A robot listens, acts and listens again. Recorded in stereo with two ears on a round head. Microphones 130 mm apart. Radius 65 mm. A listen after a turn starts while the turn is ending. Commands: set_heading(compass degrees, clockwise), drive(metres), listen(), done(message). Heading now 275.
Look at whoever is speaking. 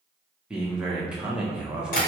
set_heading(305)
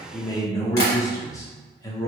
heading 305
set_heading(280)
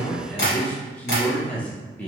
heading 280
set_heading(270)
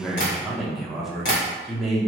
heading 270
done("Facing the man speaking.")